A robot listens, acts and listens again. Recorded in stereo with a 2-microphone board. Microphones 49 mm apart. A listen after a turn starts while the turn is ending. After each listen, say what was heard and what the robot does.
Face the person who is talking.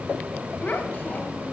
The child speaking: about 35° left or 145° left. Turn 35° left.
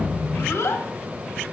So it is at 105° left. Turn 105° left.
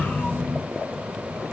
Keep listening.
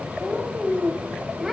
Found it: a child speaking, straight ahead, 1 to 2 m away.